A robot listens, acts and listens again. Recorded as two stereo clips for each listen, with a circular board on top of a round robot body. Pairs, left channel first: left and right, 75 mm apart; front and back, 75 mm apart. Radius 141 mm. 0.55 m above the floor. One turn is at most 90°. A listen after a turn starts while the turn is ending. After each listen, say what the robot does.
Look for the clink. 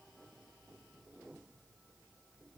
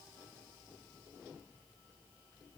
Keep listening.
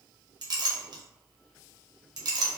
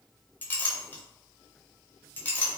Turn 65° right.
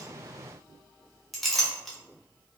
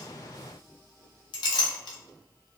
Facing the clink.